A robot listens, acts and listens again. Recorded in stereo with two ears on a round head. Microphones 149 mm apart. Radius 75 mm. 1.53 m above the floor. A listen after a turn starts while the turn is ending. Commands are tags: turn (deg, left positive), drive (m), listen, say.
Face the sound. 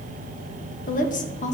<turn deg="45"/>
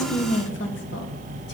<turn deg="100"/>
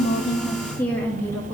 <turn deg="10"/>
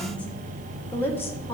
<turn deg="10"/>
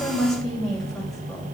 <say>Found it: a woman speaking, straight ahead.</say>